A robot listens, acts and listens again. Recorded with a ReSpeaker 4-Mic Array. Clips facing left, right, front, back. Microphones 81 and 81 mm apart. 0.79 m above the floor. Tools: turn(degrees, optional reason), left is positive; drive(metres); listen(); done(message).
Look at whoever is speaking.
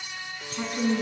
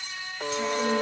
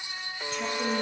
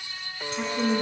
turn(degrees=125, reason="The woman speaking: 125° left.")
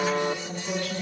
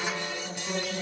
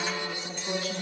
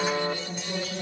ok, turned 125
turn(degrees=-10, reason="The woman speaking is now 10° right.")
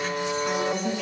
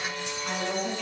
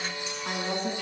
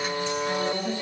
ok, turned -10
done("Found it: a woman speaking, straight ahead, over 4 m away.")